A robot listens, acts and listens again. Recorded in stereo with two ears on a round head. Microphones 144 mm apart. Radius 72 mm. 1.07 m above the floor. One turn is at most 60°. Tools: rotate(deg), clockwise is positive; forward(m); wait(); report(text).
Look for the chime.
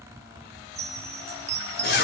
rotate(40)
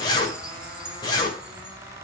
wait()
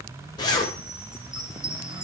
report("Found it: a chime, straight ahead.")